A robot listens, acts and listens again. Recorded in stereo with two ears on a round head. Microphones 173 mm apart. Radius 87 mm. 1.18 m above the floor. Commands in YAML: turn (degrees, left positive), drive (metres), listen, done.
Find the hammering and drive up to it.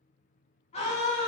listen: true
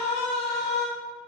listen: true
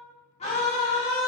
done: "I can't make out hammering to turn to."